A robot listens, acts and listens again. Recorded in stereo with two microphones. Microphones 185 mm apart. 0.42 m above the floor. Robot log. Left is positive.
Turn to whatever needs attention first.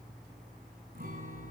cmd idle
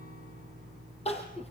note: The crying: about 35° left or 145° left.
cmd yaw +35
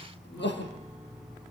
note: So it is at 110° left.
cmd yaw +110
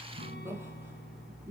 note: The crying is now 15° right.
cmd yaw -15
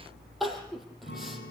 end: Facing the crying.